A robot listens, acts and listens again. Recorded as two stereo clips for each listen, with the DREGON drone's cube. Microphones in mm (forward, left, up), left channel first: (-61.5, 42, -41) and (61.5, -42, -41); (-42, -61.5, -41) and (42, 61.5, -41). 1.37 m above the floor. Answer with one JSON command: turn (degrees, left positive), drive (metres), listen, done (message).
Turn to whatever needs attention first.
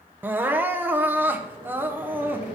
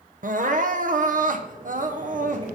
{"turn": 40}
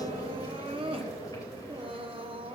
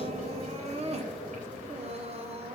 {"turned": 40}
{"turn": 15}
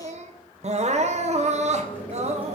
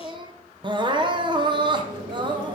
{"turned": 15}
{"done": "Found it: crying, straight ahead."}